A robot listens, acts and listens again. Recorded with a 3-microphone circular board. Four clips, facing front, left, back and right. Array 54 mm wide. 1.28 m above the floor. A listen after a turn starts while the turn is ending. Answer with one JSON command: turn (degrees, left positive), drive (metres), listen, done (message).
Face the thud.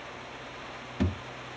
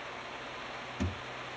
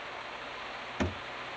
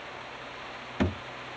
{"turn": -120}
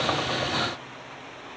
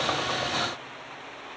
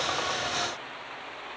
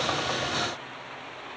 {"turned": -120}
{"done": "I heard a thud from this way, but can't make it out now."}